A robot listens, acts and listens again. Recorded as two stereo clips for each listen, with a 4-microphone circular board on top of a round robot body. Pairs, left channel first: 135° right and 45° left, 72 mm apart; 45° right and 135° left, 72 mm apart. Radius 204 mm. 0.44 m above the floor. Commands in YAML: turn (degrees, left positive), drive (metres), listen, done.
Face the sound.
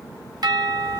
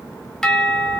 turn: 40
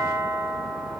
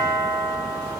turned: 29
turn: 10
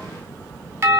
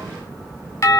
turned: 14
done: "Facing the doorbell, 2 to 4 m away."